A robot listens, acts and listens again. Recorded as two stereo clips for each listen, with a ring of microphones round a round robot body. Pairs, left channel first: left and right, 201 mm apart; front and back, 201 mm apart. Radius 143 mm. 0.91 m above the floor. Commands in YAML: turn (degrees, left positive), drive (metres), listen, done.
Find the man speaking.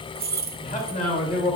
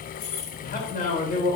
turn: 50
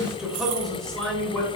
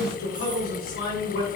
turn: 10
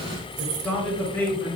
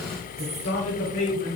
turn: 10
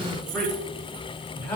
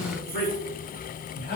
turn: 15
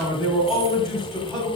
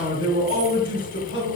done: "Facing the man speaking."